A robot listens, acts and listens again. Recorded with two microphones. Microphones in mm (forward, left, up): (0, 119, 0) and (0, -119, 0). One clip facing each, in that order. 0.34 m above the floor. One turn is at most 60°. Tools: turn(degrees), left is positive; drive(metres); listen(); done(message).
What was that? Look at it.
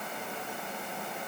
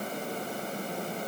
listen()
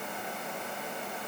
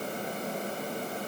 listen()
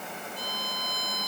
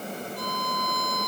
turn(degrees=-60)
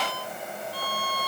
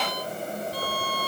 turn(degrees=-45)
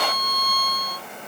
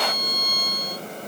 turn(degrees=-15)
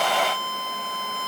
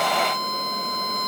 done("Facing the violin.")